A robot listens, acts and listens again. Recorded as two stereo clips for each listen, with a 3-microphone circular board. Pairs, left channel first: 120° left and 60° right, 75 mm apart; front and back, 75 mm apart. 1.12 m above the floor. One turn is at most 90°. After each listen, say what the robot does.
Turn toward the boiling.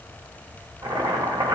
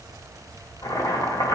Turn 35° right.
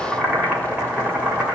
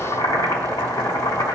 Turn 10° left.
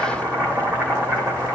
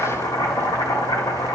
Facing the boiling, 1 to 2 m away.